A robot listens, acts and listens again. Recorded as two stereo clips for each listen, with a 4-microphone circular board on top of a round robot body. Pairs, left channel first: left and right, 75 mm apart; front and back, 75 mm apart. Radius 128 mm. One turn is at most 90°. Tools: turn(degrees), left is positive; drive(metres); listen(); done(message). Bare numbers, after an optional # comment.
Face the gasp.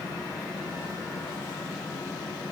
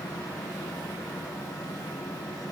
listen()
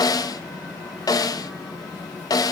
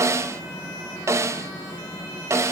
listen()
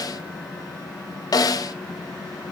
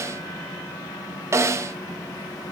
done("I can't make out a gasp, only a snare drum.")